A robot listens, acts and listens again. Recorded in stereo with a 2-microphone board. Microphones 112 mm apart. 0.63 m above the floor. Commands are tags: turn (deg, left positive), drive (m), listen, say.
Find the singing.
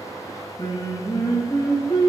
<turn deg="55"/>
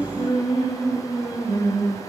<turn deg="45"/>
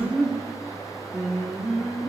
<say>Facing the singing.</say>